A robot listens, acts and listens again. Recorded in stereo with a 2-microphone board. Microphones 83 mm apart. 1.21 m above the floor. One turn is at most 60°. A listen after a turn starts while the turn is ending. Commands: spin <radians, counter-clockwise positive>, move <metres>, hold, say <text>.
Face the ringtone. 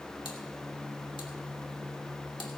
hold
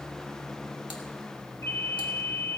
spin 0.70
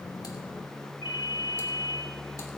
spin 1.05
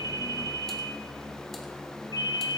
spin 1.05
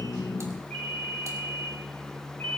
spin 0.35
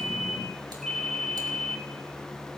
say Facing the ringtone, 2 to 4 m away.